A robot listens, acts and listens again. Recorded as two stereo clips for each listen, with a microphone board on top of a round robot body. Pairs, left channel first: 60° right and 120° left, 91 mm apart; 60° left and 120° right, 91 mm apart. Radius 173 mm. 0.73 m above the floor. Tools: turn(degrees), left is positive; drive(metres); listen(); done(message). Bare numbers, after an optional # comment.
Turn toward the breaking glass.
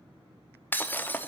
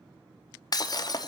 # The breaking glass: 10° left.
turn(10)
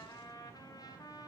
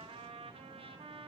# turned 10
done("Facing where the breaking glass came from. I can't hear it now.")